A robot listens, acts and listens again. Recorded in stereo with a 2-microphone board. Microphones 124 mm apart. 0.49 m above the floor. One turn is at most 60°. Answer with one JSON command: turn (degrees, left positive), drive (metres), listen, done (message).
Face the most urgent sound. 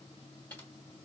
{"listen": true}
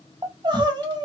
{"turn": -40}
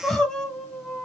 {"done": "Found it: crying, straight ahead."}